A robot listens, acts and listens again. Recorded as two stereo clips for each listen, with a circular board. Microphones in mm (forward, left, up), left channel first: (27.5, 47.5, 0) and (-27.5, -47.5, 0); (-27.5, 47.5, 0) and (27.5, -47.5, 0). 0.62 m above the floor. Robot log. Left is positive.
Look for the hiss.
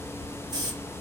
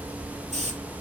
note: The hiss: 65° right.
cmd yaw -65
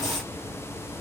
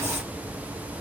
cmd idle
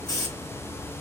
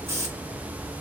end: Facing the hiss.